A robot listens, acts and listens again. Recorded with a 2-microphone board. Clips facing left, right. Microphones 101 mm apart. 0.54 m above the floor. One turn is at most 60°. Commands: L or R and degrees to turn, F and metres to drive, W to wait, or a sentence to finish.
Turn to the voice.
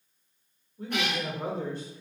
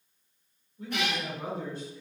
L55
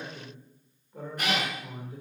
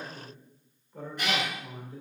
L15
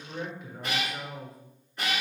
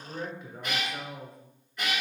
Found it: a man speaking, straight ahead.